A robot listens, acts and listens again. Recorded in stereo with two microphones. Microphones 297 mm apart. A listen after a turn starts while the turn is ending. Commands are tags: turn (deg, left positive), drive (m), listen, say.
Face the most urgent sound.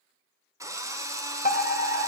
<turn deg="30"/>
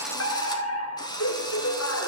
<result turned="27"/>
<turn deg="120"/>
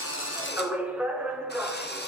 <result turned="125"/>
<say>Found it: a fire alarm, straight ahead.</say>